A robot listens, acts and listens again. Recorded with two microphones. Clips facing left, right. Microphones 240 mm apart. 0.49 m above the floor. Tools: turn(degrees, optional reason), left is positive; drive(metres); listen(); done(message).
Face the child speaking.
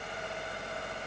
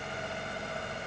listen()
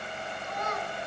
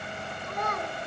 turn(degrees=-55, reason="The child speaking: about 55° right or 125° right.")
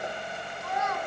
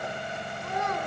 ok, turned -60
turn(degrees=-35, reason="So it is at 35° right.")
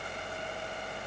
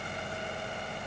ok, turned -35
listen()
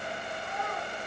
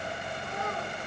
turn(degrees=-45, reason="The child speaking is now 45° right.")
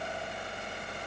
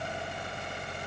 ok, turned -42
listen()
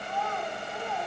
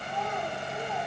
turn(degrees=-20, reason="The child speaking is now 20° right.")
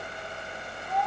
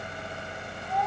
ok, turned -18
done("Found it: a child speaking, straight ahead.")